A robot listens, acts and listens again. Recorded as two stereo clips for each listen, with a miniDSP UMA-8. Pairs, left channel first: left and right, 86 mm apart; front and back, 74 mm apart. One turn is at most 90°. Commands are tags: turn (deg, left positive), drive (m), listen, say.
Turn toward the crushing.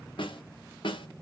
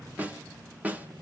<listen/>
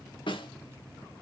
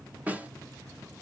<listen/>
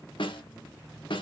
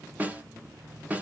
<say>I can't make out crushing to turn to.</say>